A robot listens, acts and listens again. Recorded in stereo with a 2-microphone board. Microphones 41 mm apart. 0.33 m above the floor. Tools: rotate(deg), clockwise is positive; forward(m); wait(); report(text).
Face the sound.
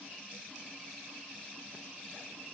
wait()
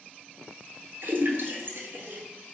rotate(60)
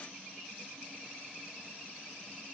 wait()
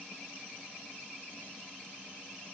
report("I heard a splash, but can't make it out now. It was about straight ahead or 60° right.")